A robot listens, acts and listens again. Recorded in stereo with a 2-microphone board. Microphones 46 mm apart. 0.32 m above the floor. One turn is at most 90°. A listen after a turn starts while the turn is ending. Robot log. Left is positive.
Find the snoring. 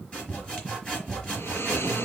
note: The snoring: about 65° left or 115° left.
cmd yaw +65
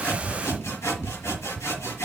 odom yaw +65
cmd idle
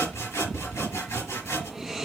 end: Facing the snoring, 2 to 4 m away.